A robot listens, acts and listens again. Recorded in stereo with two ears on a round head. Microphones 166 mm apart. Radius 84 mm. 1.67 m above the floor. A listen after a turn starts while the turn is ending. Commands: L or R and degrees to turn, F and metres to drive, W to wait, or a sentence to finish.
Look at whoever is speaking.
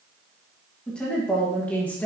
L30
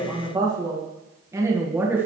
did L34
R10
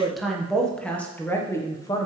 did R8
L20
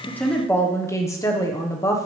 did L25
L15
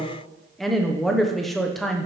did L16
Found it: a woman speaking, straight ahead.